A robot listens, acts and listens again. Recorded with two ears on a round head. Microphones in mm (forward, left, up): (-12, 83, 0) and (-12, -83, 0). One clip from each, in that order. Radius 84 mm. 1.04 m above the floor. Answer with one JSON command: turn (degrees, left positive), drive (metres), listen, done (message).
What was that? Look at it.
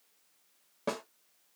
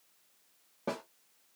{"turn": 35}
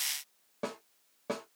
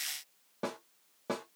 {"done": "Found it: a snare drum, straight ahead, 1 to 2 m away."}